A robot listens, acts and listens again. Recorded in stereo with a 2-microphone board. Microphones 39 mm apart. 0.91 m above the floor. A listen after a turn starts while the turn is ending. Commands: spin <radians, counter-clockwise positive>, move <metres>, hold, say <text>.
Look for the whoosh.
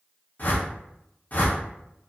spin 0.70
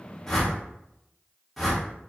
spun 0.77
say Facing the whoosh.